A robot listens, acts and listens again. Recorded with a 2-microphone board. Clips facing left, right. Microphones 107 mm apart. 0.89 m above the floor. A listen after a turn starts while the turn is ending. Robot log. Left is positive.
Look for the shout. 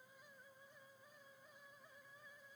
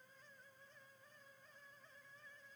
cmd idle
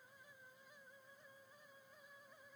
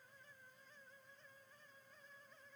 cmd idle
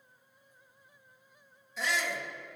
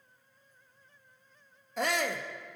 note: The shout: about 50° right or 130° right.
cmd yaw -50
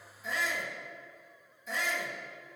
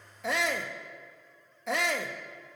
note: So it is at 80° right.
cmd yaw -80
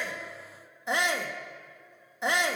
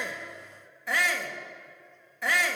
note: The shout is now 25° left.
cmd yaw +25
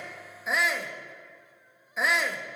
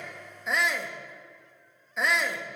end: Facing the shout, 1 to 2 m away.